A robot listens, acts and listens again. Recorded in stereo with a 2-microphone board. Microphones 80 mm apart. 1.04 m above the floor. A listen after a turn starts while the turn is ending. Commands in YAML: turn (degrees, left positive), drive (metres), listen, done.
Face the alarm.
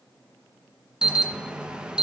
turn: -30
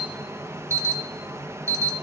turn: -135
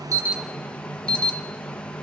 turn: 15
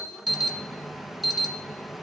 done: "Found it: an alarm, straight ahead."